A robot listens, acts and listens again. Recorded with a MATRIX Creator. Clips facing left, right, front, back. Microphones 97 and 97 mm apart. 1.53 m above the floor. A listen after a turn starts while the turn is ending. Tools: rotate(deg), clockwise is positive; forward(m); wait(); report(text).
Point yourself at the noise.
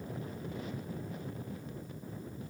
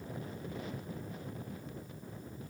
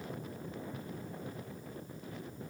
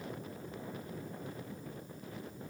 wait()
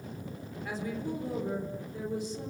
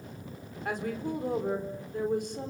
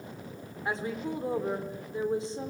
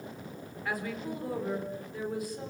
rotate(65)
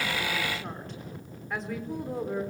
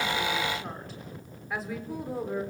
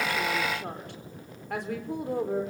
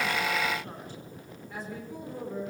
report("Facing the woman speaking, over 4 m away.")